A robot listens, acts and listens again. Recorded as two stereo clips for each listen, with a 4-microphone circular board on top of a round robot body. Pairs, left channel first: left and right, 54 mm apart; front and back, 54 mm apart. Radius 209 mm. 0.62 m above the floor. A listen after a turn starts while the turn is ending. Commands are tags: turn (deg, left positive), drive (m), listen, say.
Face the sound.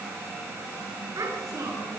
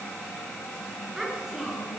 <turn deg="-100"/>
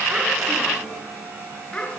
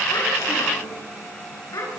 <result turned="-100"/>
<turn deg="15"/>
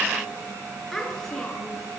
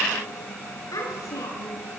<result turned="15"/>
<say>Facing the child speaking.</say>